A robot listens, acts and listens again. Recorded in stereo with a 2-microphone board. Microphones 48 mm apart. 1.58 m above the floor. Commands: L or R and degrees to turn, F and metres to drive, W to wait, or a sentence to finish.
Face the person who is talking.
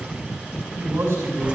R90
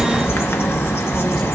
W
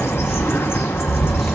W
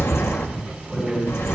Found it: a man speaking, straight ahead, over 4 m away.